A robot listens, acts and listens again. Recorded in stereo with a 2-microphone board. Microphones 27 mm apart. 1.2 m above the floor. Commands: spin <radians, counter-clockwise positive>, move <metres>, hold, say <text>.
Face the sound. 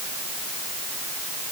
hold
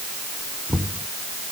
spin -0.52
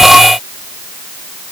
hold
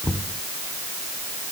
spin -2.53
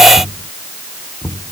spin -0.70
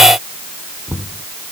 spin -0.17
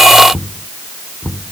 say Found it: knocking, straight ahead.